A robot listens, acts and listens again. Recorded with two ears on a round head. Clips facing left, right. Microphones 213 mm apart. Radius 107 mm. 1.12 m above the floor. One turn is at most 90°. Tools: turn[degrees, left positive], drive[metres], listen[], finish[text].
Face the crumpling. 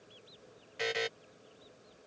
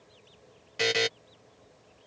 Action: listen[]
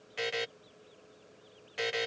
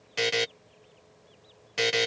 Action: listen[]
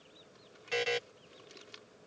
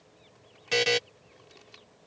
Thought: The crumpling: about 25° left or 155° left.
Action: turn[25]
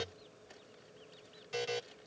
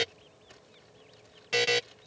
Action: finish[Found it: crumpling, straight ahead.]